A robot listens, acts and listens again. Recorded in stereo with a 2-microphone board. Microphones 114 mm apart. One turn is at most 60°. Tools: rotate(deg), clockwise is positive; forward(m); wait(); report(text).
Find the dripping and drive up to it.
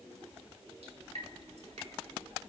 rotate(60)
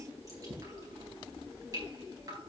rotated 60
rotate(35)
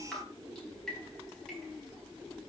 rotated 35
forward(1.0)
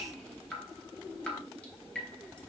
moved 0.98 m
rotate(-10)
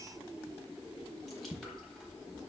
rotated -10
forward(1.0)
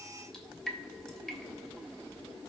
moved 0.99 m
forward(1.0)
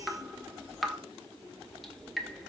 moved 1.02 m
forward(1.0)
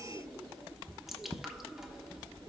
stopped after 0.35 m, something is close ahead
report("I am next to the dripping.")